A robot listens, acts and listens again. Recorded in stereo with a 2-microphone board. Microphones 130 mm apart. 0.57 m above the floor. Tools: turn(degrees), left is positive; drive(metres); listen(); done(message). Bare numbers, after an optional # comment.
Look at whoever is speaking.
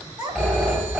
# The child speaking: about 35° right or 145° right.
turn(-35)
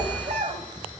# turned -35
# So it is at 110° right.
turn(-110)
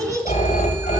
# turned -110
# The child speaking is now 30° right.
turn(-30)
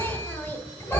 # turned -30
listen()
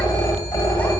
listen()
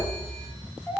# The child speaking is now 15° left.
turn(15)
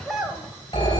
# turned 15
done("Found it: a child speaking, straight ahead, 1 to 2 m away.")